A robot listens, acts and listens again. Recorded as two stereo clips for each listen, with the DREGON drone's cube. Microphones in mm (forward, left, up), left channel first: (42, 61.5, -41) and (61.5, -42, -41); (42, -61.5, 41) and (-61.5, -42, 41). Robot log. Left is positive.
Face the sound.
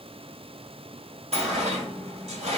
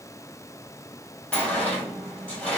note: The sliding door: 90° right.
cmd yaw -90
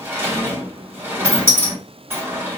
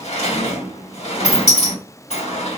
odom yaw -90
note: The sliding door is now 10° right.
cmd yaw -10
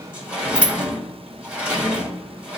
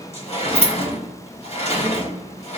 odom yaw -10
end: Facing the sliding door, 1 to 2 m away.